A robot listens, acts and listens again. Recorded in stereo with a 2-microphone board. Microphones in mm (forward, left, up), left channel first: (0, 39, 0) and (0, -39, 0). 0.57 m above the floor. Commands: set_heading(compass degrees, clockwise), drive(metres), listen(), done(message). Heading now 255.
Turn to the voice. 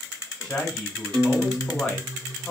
set_heading(225)
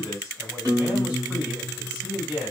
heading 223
set_heading(243)
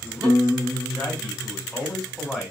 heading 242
done("Found it: a man speaking, straight ahead, 1 to 2 m away.")